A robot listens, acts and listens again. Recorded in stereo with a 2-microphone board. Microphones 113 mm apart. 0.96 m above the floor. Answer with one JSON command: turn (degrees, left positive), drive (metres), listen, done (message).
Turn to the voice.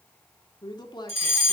{"turn": 40}
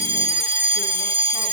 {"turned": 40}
{"listen": true}
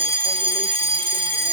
{"listen": true}
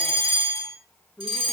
{"done": "Facing the woman speaking."}